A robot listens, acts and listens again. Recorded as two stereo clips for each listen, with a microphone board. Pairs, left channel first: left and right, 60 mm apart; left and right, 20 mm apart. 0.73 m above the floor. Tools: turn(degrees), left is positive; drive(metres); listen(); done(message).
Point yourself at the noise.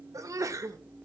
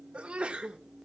turn(degrees=-65)
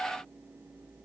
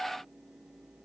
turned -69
listen()
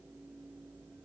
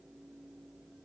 done("I heard a sneeze, but can't make it out now. It was about straight ahead or 45° right.")